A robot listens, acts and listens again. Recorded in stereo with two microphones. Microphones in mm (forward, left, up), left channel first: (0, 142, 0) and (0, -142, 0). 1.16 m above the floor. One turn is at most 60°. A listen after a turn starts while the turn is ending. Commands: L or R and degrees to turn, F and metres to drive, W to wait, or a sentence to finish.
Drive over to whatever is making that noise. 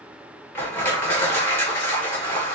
L30
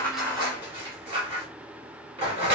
R20
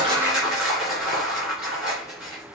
F1.0
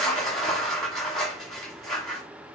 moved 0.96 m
F1.0
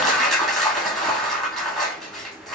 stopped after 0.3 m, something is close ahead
I am next to the crushing.